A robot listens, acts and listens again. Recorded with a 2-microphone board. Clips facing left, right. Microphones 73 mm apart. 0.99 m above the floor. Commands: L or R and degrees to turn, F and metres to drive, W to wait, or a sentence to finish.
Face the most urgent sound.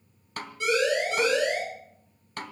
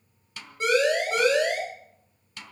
R40
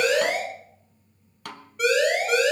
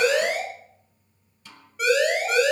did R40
Found it: a siren, straight ahead.